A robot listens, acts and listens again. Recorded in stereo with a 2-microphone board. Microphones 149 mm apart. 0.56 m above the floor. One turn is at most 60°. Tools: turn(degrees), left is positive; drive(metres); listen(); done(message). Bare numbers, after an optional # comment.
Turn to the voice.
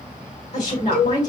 # The woman speaking: about 55° left or 125° left.
turn(55)
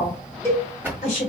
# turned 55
# So it is at 60° left.
turn(60)
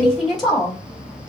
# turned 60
done("Found it: a woman speaking, straight ahead, 1 to 2 m away.")